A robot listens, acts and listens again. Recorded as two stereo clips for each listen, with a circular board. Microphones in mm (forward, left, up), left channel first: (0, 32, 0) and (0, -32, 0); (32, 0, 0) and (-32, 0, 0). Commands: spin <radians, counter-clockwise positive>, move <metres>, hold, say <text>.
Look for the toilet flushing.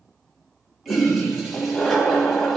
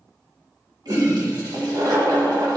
spin -3.05
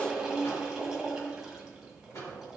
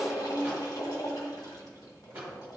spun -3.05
say Found it: a toilet flushing, straight ahead, 1 to 2 m away.